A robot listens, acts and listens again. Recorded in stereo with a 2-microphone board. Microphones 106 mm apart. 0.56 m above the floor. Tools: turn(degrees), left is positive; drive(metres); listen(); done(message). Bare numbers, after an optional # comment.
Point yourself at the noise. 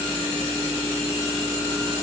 listen()
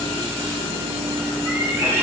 # The cat meowing: about 25° right or 155° right.
turn(-25)
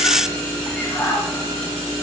done("Facing the cat meowing.")